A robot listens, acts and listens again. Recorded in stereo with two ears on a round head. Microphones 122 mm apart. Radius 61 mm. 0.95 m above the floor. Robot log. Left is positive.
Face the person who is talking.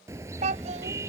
note: The child speaking: about 55° right or 125° right.
cmd yaw -55
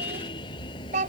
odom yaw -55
note: So it is at 60° right.
cmd yaw -60
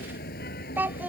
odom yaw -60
note: The child speaking is now 15° right.
cmd yaw -15
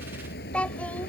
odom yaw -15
note: The child speaking is now 10° left.
cmd yaw +10
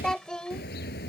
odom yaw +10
end: Facing the child speaking.